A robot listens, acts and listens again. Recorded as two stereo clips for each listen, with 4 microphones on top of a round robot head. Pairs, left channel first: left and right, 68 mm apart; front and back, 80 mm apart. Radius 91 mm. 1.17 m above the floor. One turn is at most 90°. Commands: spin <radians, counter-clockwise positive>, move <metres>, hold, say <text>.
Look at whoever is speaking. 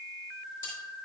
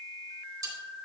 hold
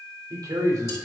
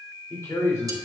spin -0.96
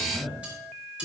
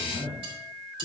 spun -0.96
spin 0.17
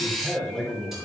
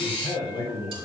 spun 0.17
spin 0.17
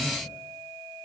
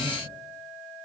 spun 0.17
hold
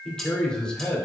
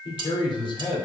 spin 0.26
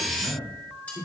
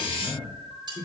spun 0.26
say Facing the man speaking.